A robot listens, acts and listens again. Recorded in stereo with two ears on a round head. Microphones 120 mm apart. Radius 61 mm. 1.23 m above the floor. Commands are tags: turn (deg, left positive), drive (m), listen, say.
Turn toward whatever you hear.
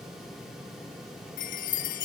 <turn deg="75"/>
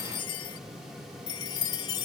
<turn deg="30"/>
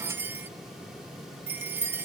<turn deg="-15"/>
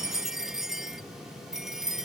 <say>Facing the chime.</say>